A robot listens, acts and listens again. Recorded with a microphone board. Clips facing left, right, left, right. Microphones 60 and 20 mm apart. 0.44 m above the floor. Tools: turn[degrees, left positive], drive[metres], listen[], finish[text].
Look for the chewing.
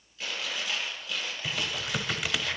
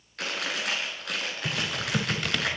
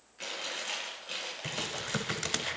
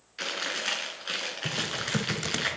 Action: turn[-90]
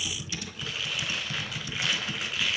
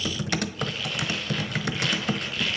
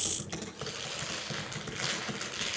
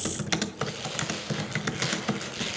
Action: listen[]
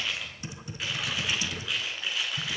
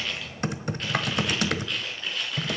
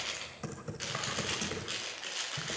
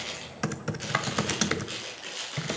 Action: finish[Facing the chewing, over 4 m away.]